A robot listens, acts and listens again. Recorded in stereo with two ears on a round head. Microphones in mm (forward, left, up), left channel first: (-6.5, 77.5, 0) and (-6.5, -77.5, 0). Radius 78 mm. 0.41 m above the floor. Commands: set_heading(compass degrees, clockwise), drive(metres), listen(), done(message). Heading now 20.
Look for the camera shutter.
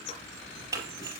set_heading(35)
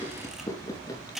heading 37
done("Found it: a camera shutter, straight ahead, over 4 m away.")